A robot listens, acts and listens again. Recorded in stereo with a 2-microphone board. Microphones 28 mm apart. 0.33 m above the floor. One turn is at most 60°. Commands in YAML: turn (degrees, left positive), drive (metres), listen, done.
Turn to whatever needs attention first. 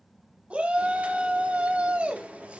turn: -45
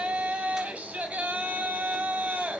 turn: -60
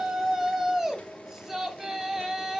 turn: -20
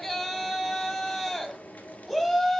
done: "Facing the shout, 1 to 2 m away."